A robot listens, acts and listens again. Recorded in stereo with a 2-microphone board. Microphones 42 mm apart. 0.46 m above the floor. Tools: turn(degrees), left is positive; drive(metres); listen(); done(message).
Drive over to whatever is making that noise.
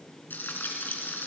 turn(degrees=50)
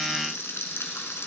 turn(degrees=80)
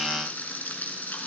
turn(degrees=40)
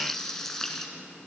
turn(degrees=10)
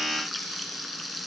drive(metres=1.0)
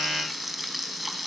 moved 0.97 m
drive(metres=1.0)
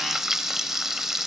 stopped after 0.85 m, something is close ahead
turn(degrees=-10)
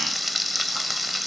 done("I am next to the frying.")